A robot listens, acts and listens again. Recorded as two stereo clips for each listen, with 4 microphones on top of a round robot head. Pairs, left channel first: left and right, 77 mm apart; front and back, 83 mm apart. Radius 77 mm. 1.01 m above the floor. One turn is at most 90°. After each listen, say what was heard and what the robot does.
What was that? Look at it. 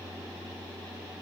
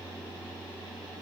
Keep listening.
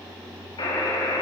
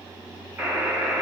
The buzzer: 110° left. Turn 90° left.
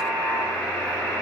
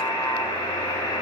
The buzzer is now 15° left. Turn 15° left.
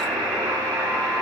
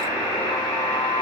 Facing the buzzer.